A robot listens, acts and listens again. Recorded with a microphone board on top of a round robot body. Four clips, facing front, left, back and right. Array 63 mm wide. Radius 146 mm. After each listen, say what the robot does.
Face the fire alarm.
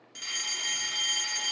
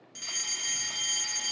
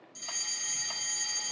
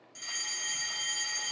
Turn 25° left.
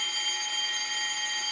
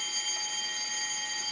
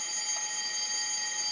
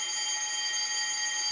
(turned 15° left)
Turn 10° left.
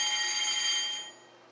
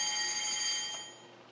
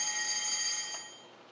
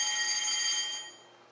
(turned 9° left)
Found it: a fire alarm, straight ahead.